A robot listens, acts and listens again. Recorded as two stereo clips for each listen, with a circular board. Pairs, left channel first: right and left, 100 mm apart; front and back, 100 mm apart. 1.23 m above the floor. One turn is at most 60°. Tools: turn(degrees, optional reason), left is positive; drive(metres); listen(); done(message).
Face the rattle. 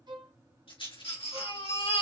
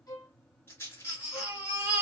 turn(degrees=-60, reason="The rattle: 65° right.")
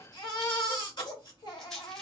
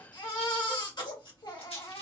done("Found it: a rattle, straight ahead, 2 to 4 m away.")